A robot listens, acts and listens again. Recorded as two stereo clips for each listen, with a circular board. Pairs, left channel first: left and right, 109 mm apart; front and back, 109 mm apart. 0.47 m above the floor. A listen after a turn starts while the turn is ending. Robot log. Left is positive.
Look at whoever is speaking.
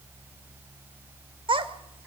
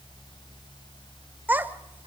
note: The child speaking: 110° right.
cmd yaw -110
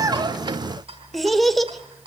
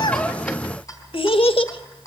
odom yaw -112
end: Found it: a child speaking, straight ahead, 1 to 2 m away.